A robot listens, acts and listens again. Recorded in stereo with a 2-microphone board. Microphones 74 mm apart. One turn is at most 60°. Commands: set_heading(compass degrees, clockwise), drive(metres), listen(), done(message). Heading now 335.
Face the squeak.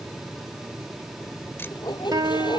set_heading(275)
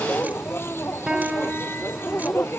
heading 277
set_heading(247)
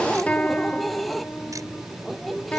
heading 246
done("Facing the squeak.")